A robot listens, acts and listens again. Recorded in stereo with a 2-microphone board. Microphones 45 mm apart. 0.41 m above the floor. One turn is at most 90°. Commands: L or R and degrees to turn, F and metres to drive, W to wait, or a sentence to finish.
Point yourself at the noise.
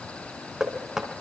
R30
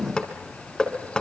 L15
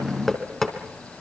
Found it: knocking, straight ahead.